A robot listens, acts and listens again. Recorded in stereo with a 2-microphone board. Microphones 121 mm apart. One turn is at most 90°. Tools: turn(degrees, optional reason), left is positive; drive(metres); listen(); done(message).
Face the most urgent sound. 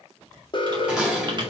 turn(degrees=40, reason="The alarm: about 40° left or 140° left.")
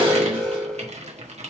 turn(degrees=10, reason="So it is at 10° left.")
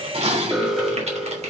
done("Found it: an alarm, straight ahead.")